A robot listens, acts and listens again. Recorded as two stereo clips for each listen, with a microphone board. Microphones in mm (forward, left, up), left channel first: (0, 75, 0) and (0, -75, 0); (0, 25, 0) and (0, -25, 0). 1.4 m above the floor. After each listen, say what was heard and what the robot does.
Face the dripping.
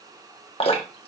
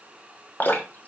The dripping: about 40° left or 140° left. Turn 40° left.
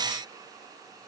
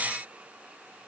Keep listening.
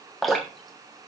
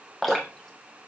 Facing the dripping, 1 to 2 m away.